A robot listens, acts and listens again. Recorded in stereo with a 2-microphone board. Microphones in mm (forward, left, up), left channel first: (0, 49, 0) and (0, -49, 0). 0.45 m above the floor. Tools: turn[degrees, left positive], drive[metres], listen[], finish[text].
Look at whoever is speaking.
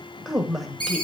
Action: turn[30]
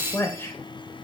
Thought: So it is at 150° left.
Action: turn[150]
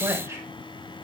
Thought: The woman speaking is now 30° right.
Action: turn[-30]
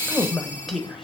Action: finish[Found it: a woman speaking, straight ahead.]